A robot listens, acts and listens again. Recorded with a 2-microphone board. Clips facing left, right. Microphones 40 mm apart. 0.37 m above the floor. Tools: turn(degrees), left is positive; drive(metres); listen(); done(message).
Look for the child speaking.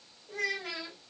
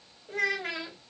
turn(degrees=-55)
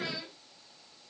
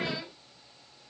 turn(degrees=-30)
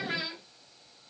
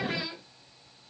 done("Found it: a child speaking, straight ahead, 1 to 2 m away.")